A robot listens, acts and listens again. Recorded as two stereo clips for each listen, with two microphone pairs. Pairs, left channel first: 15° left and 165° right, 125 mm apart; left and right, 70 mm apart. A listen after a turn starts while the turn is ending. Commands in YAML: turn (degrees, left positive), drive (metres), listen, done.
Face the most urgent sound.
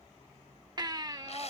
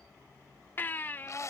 turn: 145
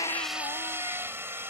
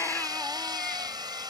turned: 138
turn: 10
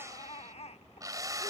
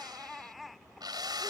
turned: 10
done: "Facing the baby crying."